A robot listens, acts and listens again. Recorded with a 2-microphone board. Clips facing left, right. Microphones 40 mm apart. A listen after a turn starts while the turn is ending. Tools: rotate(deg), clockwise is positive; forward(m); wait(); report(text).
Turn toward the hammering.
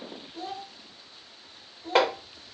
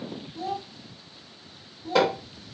rotate(-50)
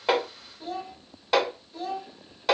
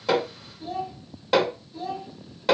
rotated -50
report("Facing the hammering, 1 to 2 m away.")